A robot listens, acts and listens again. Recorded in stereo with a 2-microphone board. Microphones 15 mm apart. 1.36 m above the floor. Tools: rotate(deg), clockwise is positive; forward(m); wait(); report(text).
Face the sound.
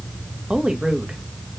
rotate(90)
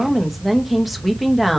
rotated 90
report("Found it: a woman speaking, straight ahead.")